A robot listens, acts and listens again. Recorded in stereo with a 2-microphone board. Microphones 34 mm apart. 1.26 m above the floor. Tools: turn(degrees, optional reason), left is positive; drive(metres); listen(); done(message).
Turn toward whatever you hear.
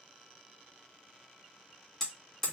turn(degrees=30)
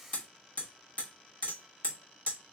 turn(degrees=135, reason="So it is at 135° left.")
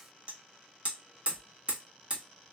turn(degrees=-35, reason="The hammering is now 35° right.")
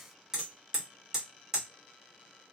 turn(degrees=-15, reason="The hammering is now 15° right.")
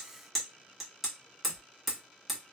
done("Facing the hammering.")